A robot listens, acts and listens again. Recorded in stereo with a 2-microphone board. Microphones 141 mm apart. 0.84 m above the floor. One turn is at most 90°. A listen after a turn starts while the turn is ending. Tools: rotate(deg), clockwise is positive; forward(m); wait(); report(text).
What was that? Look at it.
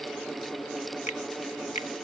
rotate(-55)
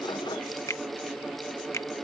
rotate(-25)
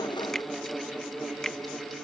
report("Found it: a finger snap, straight ahead.")